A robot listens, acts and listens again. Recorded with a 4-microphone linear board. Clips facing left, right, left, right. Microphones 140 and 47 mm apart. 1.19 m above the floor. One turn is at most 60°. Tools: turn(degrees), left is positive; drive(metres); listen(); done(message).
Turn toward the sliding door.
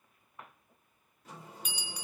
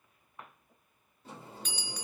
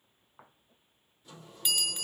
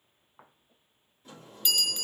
turn(degrees=-30)
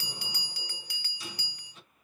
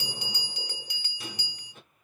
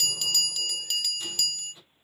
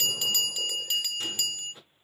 turn(degrees=-60)
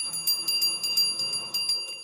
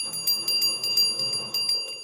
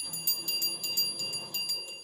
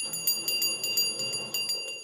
turn(degrees=-55)
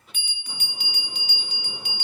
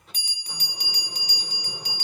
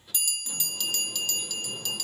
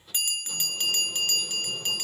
done("Found it: a sliding door, straight ahead.")